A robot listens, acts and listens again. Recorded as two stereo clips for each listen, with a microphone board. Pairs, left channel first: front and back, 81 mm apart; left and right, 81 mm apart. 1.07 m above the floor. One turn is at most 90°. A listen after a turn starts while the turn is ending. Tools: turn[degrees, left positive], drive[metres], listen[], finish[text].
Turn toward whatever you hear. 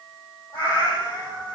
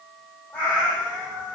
Thought: The cat meowing: 20° left.
Action: turn[20]
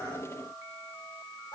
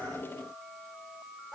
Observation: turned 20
Action: finish[Found it: a cat meowing, straight ahead, 2 to 4 m away.]